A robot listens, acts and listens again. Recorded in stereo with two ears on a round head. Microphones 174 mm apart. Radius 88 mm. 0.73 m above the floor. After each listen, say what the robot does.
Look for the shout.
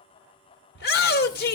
Turn 55° left.
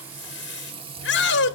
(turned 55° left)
Turn 65° left.
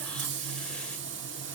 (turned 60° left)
Keep listening.
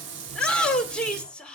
Facing the shout, 1 to 2 m away.